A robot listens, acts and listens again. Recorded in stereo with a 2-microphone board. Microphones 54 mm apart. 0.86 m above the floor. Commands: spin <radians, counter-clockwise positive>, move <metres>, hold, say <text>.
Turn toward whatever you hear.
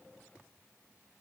hold
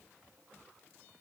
hold
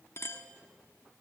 spin 0.96
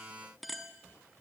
say Facing the clink, under 1 m away.